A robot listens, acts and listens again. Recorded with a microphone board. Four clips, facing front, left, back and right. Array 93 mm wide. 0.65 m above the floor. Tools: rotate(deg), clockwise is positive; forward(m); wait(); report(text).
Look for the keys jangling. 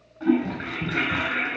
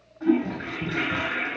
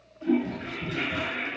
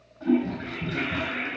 wait()
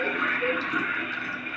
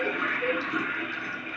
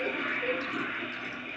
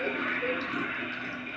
wait()
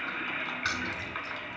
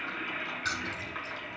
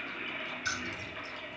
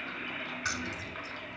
rotate(15)
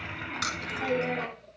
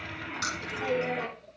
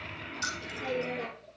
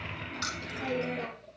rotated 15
report("Found it: keys jangling, straight ahead, 2 to 4 m away.")